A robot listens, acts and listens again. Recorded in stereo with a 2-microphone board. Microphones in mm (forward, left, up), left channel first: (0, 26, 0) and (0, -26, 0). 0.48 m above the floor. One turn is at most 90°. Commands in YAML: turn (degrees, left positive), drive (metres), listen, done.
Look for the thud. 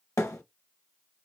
turn: 90
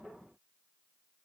done: "Facing where the thud came from. I can't hear it now."